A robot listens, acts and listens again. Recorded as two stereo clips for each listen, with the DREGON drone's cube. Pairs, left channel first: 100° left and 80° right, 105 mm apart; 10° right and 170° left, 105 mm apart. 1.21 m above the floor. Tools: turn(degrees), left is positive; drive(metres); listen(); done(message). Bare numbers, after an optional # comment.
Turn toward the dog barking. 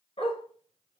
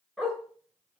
# The dog barking: 80° left.
turn(80)
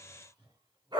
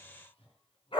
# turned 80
# The dog barking is now 35° right.
turn(-35)
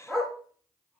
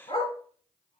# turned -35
# The dog barking is now 10° left.
turn(10)
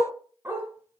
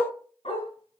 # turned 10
# The dog barking is now 10° right.
turn(-10)
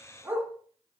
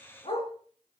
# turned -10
# The dog barking is now 15° right.
turn(-15)
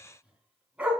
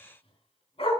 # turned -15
done("Facing the dog barking, 2 to 4 m away.")